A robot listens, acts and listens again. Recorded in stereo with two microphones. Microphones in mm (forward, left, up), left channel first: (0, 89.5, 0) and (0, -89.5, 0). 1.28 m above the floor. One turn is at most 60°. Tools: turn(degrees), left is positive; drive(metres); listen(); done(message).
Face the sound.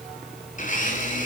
turn(degrees=45)
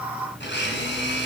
turn(degrees=60)
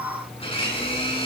turn(degrees=30)
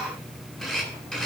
done("Facing the blender, over 4 m away.")